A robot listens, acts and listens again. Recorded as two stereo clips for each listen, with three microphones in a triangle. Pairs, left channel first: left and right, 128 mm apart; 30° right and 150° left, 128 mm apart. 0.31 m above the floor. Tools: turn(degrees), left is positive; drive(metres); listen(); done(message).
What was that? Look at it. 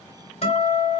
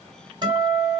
turn(degrees=105)
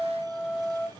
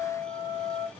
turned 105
turn(degrees=-10)
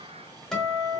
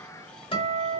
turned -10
done("Found it: a guitar, straight ahead, 1 to 2 m away.")